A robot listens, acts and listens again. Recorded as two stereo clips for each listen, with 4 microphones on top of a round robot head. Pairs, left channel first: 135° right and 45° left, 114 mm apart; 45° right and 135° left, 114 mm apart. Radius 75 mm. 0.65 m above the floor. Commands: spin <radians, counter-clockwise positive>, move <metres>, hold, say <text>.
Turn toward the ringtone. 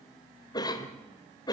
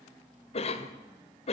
hold
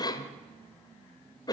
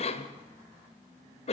hold
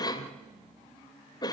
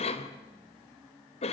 say I can't make out a ringtone to turn to.